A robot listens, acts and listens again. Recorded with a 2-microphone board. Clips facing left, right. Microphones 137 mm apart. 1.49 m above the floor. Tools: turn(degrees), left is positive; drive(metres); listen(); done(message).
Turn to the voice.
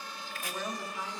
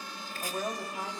turn(degrees=-40)
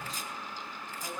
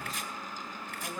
done("Facing the woman speaking.")